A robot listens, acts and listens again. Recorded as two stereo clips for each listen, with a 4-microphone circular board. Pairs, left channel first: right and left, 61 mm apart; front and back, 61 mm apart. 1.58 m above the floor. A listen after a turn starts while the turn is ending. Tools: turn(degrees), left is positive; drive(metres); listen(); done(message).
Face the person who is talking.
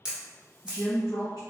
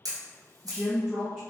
turn(degrees=-100)
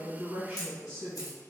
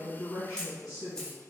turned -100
turn(degrees=10)
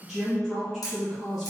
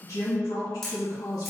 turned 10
done("Found it: a woman speaking, straight ahead.")